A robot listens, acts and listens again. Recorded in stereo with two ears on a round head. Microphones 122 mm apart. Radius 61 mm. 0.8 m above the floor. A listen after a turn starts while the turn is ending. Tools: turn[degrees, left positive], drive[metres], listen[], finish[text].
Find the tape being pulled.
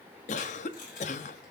Thought: The tape being pulled: about 65° left or 115° left.
Action: turn[65]
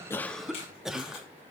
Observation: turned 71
Action: listen[]
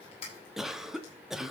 Thought: So it is at 45° left.
Action: turn[45]
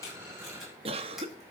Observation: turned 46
Action: listen[]
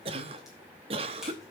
Action: listen[]
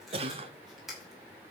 Action: finish[Facing the tape being pulled, over 4 m away.]